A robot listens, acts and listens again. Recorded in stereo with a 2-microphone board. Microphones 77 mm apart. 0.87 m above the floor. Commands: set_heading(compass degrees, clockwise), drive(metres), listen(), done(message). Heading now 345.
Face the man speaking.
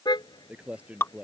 set_heading(0)
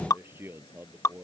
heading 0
set_heading(30)
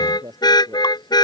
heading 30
set_heading(150)
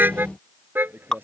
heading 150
set_heading(180)
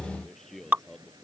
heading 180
done("Facing the man speaking.")